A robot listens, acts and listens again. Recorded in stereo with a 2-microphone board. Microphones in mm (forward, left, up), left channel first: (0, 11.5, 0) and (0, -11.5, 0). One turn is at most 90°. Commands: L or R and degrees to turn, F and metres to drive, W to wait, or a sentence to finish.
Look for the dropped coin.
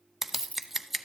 L75
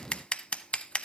W
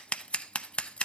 I heard a dropped coin, but can't make it out now. It was about straight ahead or 30° left.